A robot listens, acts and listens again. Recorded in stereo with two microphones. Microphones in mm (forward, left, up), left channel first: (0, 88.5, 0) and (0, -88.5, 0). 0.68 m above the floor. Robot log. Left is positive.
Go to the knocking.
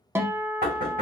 note: The knocking: about 65° right or 115° right.
cmd yaw -65
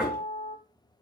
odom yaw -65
cmd fwd 1.0
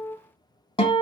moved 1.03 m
cmd idle
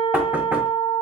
cmd idle
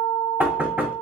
note: The knocking is now 15° right.
cmd yaw -15
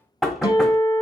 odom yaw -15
cmd fwd 1.0
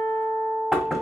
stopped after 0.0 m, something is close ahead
end: I am next to the knocking.